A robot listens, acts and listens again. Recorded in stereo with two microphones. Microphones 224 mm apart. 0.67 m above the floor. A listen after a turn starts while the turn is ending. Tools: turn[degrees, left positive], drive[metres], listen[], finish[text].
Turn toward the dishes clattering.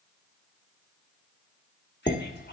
Thought: The dishes clattering: about 40° left or 140° left.
Action: turn[40]
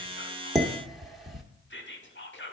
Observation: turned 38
Action: finish[Facing the dishes clattering.]